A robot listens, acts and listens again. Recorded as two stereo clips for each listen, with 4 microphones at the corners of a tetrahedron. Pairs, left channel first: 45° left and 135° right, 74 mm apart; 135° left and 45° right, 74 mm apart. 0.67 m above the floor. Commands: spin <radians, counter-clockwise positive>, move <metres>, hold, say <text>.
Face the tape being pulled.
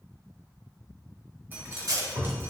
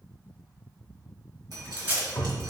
spin -1.83
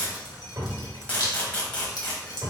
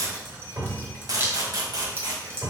spin -0.44
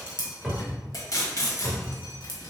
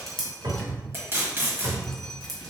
spin 0.17
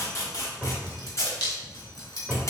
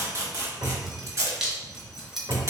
say Found it: tape being pulled, straight ahead.